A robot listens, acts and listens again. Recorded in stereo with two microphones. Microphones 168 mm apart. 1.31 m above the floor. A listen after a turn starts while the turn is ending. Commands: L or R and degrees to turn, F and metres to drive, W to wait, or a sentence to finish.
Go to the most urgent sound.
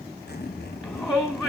R30
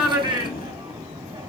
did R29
R145
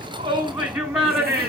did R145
F1.0
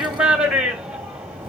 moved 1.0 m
F1.0
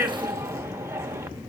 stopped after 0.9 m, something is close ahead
R15
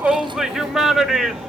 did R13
I am next to the shout.